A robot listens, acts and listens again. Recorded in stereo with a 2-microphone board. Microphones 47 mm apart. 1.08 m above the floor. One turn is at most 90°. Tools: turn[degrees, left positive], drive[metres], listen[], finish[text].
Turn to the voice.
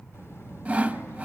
Thought: The child speaking: about 65° left or 115° left.
Action: turn[65]
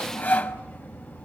Thought: So it is at 45° left.
Action: turn[45]
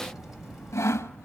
Action: finish[Facing the child speaking, over 4 m away.]